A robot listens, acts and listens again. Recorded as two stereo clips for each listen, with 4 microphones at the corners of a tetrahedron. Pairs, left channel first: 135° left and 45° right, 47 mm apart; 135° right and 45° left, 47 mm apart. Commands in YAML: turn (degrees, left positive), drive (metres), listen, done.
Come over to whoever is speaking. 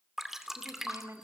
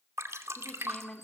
turn: -65
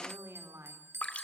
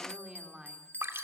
turn: -30
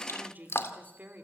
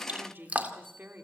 drive: 1.0
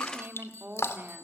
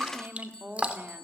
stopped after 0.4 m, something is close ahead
done: "Blocked. The woman speaking is further on, straight ahead."